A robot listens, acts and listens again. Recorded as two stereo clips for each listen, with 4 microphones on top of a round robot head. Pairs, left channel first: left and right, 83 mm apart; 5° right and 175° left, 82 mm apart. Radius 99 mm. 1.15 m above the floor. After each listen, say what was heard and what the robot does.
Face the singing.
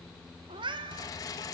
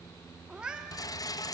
Keep listening.
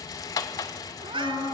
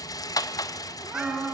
The singing: 95° left. Turn 95° left.
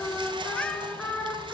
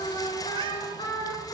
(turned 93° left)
Facing the singing, over 4 m away.